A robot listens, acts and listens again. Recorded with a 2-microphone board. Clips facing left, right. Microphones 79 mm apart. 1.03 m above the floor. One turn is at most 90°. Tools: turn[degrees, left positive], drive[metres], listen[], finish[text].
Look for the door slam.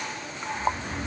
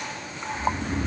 Action: listen[]
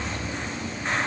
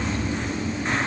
Action: listen[]
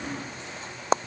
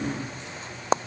Action: finish[I can't make out a door slam, only snoring.]